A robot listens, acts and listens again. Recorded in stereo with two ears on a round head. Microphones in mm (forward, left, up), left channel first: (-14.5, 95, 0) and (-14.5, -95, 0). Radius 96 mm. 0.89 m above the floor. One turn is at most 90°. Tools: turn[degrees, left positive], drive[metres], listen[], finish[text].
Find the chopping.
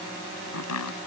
Action: turn[90]
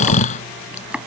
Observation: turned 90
Action: finish[Found it: chopping, straight ahead.]